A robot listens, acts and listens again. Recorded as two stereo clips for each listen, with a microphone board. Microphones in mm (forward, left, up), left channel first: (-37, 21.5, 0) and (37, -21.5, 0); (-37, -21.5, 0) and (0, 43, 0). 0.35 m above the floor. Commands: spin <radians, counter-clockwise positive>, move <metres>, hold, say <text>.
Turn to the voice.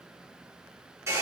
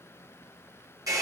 hold
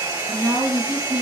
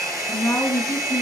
spin -1.05
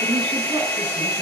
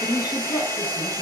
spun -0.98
say Facing the woman speaking, over 4 m away.